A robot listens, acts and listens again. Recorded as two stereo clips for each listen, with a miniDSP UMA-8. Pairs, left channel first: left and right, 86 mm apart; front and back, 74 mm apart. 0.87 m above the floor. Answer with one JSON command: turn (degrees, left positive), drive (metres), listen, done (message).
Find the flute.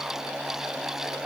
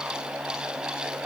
{"listen": true}
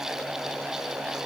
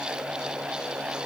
{"listen": true}
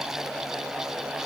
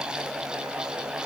{"done": "I can't make out a flute."}